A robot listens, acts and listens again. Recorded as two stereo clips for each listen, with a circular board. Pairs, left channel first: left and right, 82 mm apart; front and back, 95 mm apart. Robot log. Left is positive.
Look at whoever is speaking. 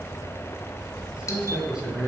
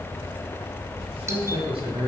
note: The man speaking: 170° right.
cmd yaw -170
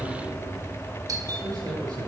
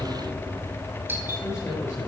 note: The man speaking is now 60° right.
cmd yaw -60
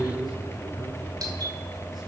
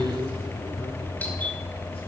end: Found it: a man speaking, straight ahead, over 4 m away.